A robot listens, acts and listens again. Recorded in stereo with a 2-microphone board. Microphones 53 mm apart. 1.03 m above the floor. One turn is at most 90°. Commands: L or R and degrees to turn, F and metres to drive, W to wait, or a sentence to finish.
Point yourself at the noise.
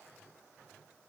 W
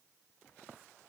W
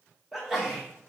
R30
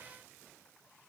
W
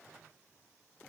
I heard a sneeze, but can't make it out now. It was about 25° left or 145° right.